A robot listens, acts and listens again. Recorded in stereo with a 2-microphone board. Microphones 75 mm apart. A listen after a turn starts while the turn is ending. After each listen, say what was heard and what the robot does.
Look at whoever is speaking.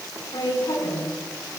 Turn 90° left.
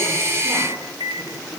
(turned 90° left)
Keep listening.
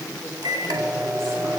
The woman speaking is now 10° left. Turn 10° left.
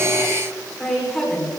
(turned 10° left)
Found it: a woman speaking, straight ahead, over 4 m away.